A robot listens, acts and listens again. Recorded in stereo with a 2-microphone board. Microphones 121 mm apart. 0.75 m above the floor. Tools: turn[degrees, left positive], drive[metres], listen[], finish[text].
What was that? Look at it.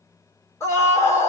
Thought: The scream: about 25° left or 155° left.
Action: turn[25]
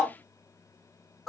Action: finish[Facing the scream, 1 to 2 m away.]